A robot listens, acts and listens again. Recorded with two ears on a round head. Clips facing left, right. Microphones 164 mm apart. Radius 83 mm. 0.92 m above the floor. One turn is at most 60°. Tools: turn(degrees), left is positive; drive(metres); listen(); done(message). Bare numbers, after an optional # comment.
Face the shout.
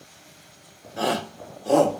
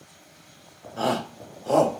turn(30)
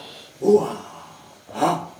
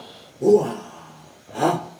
# So it is at 15° right.
turn(-15)
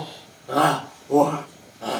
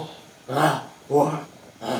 done("Facing the shout, 2 to 4 m away.")